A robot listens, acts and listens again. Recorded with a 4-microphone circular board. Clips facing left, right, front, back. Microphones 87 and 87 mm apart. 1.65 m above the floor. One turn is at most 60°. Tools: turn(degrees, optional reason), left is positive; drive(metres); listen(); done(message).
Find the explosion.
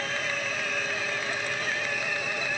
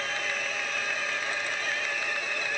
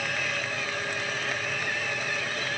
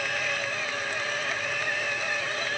listen()
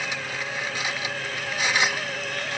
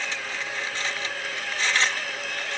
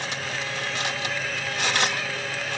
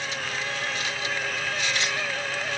listen()
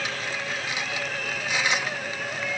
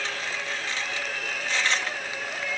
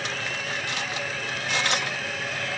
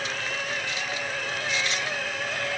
done("I can't make out an explosion, only cutlery clinking.")